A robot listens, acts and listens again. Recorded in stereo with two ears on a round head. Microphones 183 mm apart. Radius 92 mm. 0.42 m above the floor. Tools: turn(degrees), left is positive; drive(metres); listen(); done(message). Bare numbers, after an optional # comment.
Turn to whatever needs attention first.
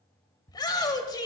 # The shout: about 20° left or 160° left.
turn(20)
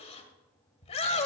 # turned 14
# So it is at 150° left.
turn(150)
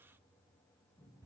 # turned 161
# Nothing new. It was at 15° right.
turn(-15)
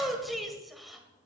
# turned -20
done("Facing the shout, 1 to 2 m away.")